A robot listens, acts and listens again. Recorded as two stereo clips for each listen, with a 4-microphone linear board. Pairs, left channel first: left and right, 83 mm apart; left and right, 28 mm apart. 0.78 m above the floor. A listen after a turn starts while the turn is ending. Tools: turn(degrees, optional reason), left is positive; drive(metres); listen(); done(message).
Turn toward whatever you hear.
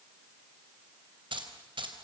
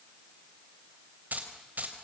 turn(degrees=-90)
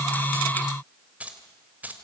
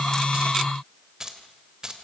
turn(degrees=-20, reason="So it is at 20° right.")
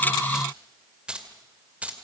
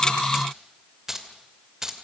turn(degrees=-15, reason="The keys jangling is now 15° right.")
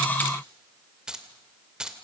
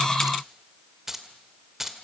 turn(degrees=-10, reason="The keys jangling is now 10° right.")
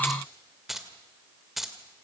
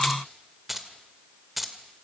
done("Facing the keys jangling.")